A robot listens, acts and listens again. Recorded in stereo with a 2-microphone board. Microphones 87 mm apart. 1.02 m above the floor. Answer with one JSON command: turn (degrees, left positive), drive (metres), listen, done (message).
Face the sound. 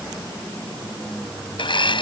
{"turn": 65}
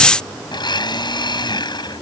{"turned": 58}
{"turn": 55}
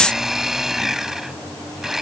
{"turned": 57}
{"done": "Found it: a blender, straight ahead."}